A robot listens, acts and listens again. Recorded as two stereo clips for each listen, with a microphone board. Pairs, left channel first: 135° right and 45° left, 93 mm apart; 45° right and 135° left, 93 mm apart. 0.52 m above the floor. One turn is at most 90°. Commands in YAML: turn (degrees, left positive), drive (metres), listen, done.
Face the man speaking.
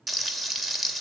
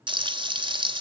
listen: true
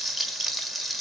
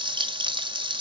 listen: true
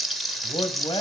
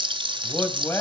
turn: -90
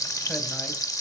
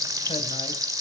turn: -15
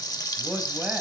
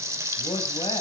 turn: -30
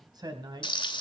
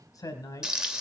turn: 10
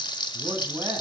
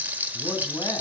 done: "Facing the man speaking."